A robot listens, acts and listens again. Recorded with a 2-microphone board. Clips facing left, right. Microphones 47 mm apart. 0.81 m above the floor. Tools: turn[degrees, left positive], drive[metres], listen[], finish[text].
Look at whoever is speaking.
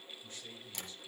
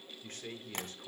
Thought: The man speaking: about 55° right or 125° right.
Action: turn[-55]
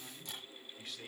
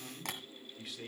Action: finish[Found it: a man speaking, straight ahead.]